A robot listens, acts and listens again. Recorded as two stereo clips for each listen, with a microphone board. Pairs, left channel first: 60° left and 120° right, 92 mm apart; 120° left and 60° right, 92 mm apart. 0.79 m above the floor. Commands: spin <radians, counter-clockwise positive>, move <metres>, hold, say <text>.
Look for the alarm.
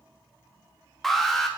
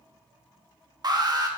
spin -0.52
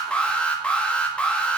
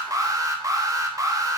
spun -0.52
spin -0.26
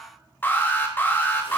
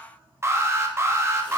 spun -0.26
say Found it: an alarm, straight ahead, under 1 m away.